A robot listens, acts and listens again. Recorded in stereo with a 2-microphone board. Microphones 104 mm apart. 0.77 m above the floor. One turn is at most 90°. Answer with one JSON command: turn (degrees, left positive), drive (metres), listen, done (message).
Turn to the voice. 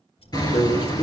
{"turn": 70}
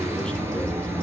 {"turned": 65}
{"listen": true}
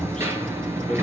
{"listen": true}
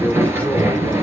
{"turn": 10}
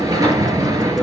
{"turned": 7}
{"listen": true}
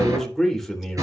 {"done": "Facing the man speaking."}